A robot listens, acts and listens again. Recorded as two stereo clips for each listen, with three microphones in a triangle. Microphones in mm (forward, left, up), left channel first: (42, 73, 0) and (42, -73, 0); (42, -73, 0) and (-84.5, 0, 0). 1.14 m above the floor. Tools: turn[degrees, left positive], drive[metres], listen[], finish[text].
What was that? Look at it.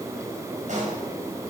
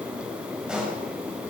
Thought: The pop: 125° right.
Action: turn[-125]
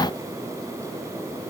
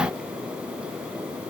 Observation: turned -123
Action: finish[Facing where the pop came from. I can't hear it now.]